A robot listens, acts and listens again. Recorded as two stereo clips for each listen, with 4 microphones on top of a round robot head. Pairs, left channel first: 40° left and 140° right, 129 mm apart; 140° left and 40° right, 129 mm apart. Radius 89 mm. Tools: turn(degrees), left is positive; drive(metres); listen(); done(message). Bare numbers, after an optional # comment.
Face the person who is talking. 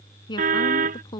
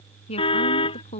# The woman speaking: 95° left.
turn(95)
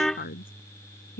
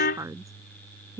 # The woman speaking is now 30° left.
turn(30)
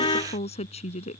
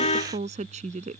done("Facing the woman speaking.")